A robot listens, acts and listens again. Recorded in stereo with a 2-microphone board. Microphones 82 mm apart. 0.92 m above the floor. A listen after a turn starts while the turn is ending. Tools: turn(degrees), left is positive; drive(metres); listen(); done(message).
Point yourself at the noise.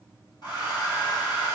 turn(degrees=60)
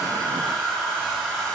done("Found it: a hair dryer, straight ahead.")